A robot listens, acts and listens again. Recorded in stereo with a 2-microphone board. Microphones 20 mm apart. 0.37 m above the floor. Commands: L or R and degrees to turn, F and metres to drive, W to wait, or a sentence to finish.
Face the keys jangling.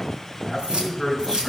R45
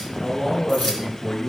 W
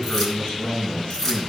L15
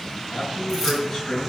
W
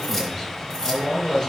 L10
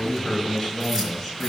W
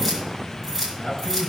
Facing the keys jangling.